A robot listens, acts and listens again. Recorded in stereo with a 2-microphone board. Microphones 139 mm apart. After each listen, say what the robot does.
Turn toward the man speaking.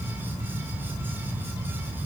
Keep listening.
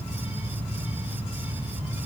Keep listening.
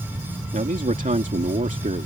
Turn 65° right.
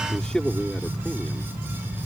Found it: a man speaking, straight ahead.